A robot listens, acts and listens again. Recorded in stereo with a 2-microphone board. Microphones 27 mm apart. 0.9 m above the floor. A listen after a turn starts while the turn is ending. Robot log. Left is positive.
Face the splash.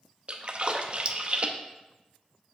note: The splash: about 40° right or 140° right.
cmd yaw -40
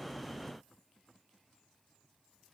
cmd idle
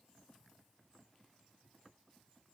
end: I heard a splash, but can't make it out now. It was about straight ahead or 100° right.